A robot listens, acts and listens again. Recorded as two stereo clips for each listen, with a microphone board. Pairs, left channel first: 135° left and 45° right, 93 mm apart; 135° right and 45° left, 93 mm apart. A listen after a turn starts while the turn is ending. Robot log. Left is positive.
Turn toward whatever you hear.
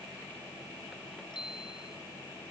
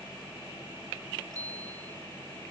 note: The bicycle bell: 100° left.
cmd yaw +100
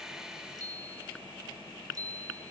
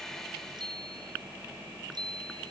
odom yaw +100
end: Found it: a bicycle bell, straight ahead.